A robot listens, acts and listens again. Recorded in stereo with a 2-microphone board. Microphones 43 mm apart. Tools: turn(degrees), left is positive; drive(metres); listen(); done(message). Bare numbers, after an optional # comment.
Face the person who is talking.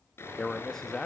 turn(30)
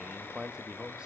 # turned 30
# So it is at 20° right.
turn(-20)
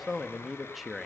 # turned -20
done("Facing the man speaking.")